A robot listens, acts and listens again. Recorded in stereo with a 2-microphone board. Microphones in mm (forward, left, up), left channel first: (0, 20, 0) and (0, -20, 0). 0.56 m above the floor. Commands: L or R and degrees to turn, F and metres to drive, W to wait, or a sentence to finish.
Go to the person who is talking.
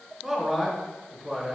R20
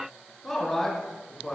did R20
F1.0
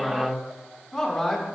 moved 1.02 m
F1.0
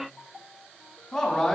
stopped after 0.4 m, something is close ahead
Arrived at the man speaking, straight ahead.